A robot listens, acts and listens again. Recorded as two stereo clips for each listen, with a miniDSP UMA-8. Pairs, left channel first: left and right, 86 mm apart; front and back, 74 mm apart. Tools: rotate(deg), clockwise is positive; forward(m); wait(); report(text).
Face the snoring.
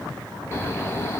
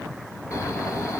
rotate(-35)
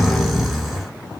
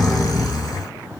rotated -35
report("Found it: snoring, straight ahead.")